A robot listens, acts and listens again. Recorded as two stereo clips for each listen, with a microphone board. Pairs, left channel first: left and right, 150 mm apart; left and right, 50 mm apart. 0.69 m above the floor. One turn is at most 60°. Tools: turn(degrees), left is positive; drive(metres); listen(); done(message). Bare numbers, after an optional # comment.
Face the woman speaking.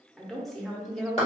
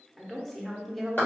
turn(30)
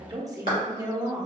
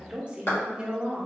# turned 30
# So it is at 30° right.
turn(-30)
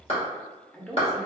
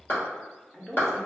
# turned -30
done("Facing the woman speaking.")